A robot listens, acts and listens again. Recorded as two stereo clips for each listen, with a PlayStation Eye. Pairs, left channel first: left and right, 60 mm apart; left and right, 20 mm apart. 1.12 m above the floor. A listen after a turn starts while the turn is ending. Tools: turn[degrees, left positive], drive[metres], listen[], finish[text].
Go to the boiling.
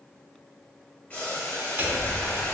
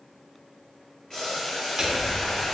Thought: The boiling: about 30° left or 150° left.
Action: turn[30]
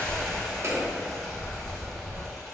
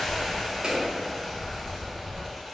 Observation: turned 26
Action: drive[1.0]
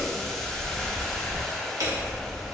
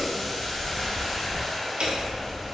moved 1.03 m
Thought: The boiling is now 10° left.
Action: turn[10]
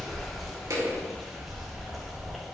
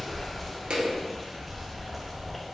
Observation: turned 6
Action: listen[]
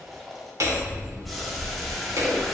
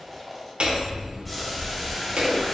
Action: drive[1.0]
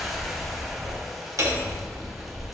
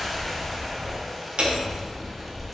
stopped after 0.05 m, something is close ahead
Action: finish[I am next to the boiling.]